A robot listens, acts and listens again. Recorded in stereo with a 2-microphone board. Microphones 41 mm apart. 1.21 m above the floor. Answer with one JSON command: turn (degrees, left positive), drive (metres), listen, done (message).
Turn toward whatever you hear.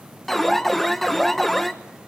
{"turn": 30}
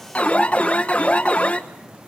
{"turn": 145}
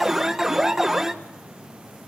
{"turn": -10}
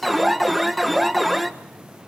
{"done": "Found it: an alarm, straight ahead."}